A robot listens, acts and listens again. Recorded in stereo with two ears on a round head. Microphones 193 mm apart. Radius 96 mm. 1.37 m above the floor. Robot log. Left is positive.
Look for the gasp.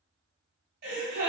note: The gasp: about 50° right or 130° right.
cmd yaw -50
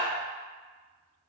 cmd idle
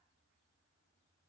end: I heard a gasp, but can't make it out now. It was about straight ahead or 80° right.